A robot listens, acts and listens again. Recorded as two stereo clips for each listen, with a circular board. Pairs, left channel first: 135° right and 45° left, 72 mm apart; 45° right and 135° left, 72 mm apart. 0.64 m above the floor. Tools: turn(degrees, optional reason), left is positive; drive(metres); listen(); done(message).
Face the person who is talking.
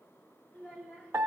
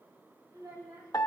turn(degrees=160, reason="The child speaking: 160° left.")
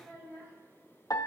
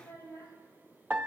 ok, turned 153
done("Facing the child speaking.")